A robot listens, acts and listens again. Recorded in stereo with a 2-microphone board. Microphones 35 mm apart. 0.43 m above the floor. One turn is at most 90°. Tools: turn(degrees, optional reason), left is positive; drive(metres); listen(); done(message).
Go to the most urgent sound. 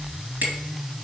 listen()
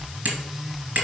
listen()
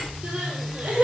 turn(degrees=-45, reason="The crying: about 45° right or 135° right.")
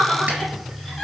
drive(metres=1.0)
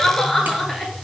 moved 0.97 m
drive(metres=1.0)
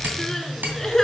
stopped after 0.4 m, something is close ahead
turn(degrees=10, reason="The crying is now 10° left.")
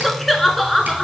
done("Arrived at the crying, straight ahead.")